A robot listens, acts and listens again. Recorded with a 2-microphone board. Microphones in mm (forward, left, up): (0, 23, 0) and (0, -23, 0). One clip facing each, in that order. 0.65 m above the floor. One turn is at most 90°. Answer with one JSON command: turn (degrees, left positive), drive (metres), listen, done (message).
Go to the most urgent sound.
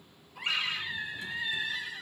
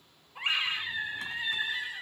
{"turn": -30}
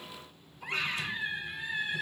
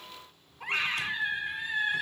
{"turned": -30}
{"turn": -90}
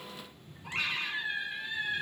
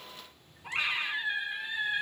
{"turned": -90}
{"turn": -15}
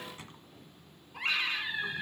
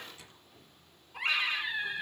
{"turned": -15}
{"drive": 1.0}
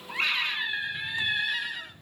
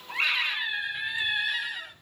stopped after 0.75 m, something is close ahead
{"done": "Arrived at the scream, straight ahead."}